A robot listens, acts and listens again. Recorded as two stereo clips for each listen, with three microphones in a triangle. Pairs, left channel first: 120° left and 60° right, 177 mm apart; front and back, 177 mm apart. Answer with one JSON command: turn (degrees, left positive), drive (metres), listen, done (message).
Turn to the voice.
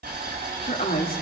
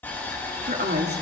{"turn": 155}
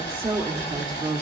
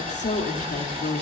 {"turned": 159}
{"done": "Facing the woman speaking."}